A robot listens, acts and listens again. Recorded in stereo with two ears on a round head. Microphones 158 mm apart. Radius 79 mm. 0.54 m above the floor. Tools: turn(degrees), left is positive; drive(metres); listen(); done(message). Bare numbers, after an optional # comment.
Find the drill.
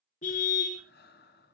listen()
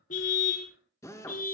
# The drill: about 15° left or 165° left.
turn(15)
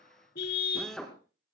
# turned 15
done("Found it: a drill, straight ahead, 2 to 4 m away.")